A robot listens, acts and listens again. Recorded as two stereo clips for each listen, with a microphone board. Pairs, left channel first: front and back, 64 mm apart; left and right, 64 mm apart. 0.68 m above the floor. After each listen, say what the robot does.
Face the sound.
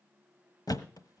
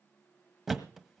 Found it: a thud, straight ahead, 1 to 2 m away.